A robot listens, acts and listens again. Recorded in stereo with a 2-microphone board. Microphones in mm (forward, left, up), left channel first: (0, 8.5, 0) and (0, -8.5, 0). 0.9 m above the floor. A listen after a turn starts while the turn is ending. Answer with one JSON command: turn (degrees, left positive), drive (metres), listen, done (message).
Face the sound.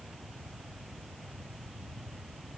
{"listen": true}
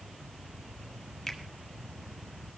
{"turn": 30}
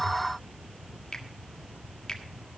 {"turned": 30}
{"turn": 140}
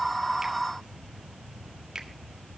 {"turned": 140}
{"turn": -35}
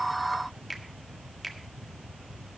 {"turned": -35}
{"done": "Found it: a finger snap, straight ahead, 1 to 2 m away."}